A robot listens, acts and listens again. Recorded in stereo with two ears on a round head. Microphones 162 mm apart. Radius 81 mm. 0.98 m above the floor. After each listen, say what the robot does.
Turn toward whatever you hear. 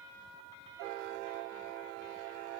Keep listening.
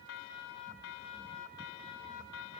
Keep listening.
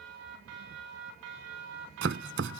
Turn 90° right.
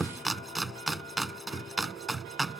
Found it: chopping, straight ahead.